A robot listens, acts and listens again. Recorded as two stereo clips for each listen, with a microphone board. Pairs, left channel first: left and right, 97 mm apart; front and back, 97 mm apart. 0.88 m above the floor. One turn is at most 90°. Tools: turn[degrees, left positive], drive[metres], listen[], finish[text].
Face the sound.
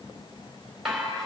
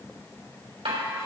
Thought: The dishes clattering: straight behind.
Action: turn[90]
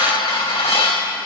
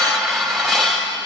Thought: The dishes clattering is now 85° left.
Action: turn[85]
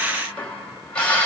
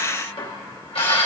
Thought: The dishes clattering is now 10° left.
Action: turn[10]
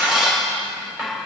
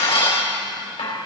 Action: finish[Facing the dishes clattering.]